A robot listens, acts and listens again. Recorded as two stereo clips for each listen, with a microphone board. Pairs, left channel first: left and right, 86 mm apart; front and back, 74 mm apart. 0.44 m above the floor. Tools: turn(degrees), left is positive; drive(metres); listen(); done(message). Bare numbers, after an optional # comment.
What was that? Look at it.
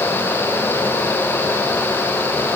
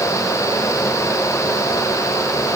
listen()
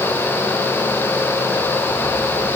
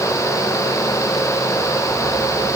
listen()
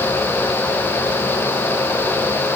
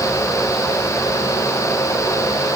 done("I can't make out anything to turn to.")